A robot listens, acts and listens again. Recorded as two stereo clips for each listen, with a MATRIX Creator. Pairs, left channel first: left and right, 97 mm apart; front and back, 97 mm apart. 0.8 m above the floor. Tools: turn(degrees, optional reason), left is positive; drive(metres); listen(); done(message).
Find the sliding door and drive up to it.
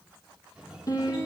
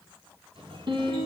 turn(degrees=-170, reason="The sliding door: 170° right.")
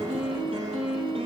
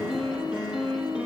listen()
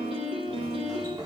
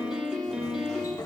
turn(degrees=-45, reason="The sliding door is now 45° right.")
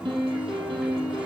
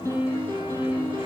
listen()
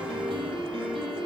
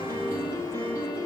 listen()
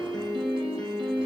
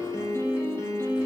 done("I heard a sliding door from this way, but can't make it out now. I did not reach it.")